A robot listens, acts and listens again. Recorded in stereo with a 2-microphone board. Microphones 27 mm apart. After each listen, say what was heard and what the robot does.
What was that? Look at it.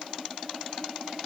Keep listening.
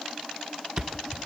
The thud: about 25° right or 155° right. Turn 25° right.
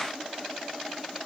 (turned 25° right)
Keep listening.
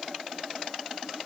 I heard a thud, but can't make it out now. It was about straight ahead or 130° right.